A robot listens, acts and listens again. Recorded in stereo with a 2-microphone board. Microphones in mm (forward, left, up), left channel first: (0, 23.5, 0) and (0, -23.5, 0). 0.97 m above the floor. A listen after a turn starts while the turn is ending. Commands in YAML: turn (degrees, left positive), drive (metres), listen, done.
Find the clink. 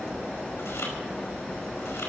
listen: true
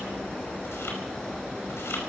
listen: true
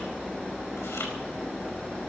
done: "I can't make out a clink."